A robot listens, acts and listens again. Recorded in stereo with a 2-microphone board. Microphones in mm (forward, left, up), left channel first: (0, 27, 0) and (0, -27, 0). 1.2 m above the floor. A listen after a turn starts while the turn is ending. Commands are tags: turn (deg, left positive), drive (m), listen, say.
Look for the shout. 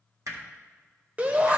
<turn deg="-25"/>
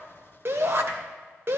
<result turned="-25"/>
<turn deg="-120"/>
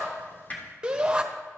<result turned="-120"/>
<turn deg="-25"/>
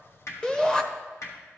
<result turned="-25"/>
<turn deg="15"/>
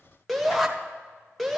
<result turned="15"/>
<say>Found it: a shout, straight ahead, under 1 m away.</say>